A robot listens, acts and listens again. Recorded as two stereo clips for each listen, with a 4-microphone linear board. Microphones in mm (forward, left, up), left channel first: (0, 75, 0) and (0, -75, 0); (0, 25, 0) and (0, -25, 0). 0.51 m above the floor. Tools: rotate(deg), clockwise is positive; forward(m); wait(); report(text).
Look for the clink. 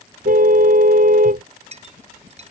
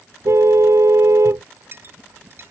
rotate(45)
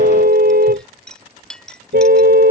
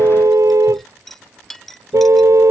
report("Found it: a clink, straight ahead.")